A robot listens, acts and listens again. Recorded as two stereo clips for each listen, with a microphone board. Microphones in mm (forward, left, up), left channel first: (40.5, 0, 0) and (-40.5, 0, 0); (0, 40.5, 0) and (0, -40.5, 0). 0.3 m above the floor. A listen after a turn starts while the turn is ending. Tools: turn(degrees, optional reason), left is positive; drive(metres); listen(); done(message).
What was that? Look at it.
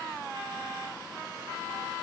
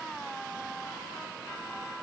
listen()
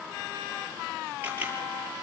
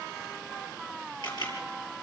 turn(degrees=115, reason="The camera shutter: 115° left.")
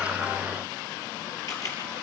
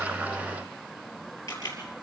turn(degrees=40, reason="The camera shutter is now 40° left.")
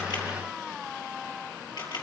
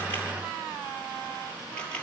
turn(degrees=20, reason="The camera shutter is now 20° left.")
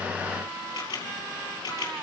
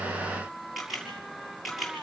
done("Facing the camera shutter.")